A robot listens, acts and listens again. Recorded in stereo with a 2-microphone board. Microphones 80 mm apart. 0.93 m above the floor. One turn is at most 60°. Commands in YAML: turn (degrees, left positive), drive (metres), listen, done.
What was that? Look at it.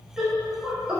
turn: -30
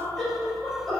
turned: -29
done: "Facing the laughter, 2 to 4 m away."